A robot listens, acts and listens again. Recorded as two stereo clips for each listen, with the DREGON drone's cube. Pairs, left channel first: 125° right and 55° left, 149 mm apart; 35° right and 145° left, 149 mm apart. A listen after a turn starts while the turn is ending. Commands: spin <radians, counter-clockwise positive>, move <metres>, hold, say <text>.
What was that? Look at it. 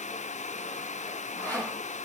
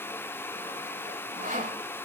spin 2.79
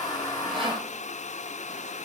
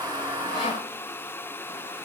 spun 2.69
spin 0.17
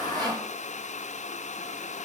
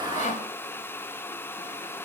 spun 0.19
say Found it: sawing, straight ahead, over 4 m away.